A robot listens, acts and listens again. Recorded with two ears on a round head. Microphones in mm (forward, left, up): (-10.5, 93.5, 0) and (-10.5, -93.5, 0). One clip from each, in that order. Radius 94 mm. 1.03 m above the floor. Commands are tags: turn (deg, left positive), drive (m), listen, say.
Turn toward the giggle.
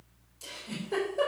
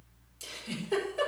<turn deg="-55"/>
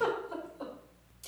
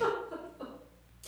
<say>Found it: a giggle, straight ahead.</say>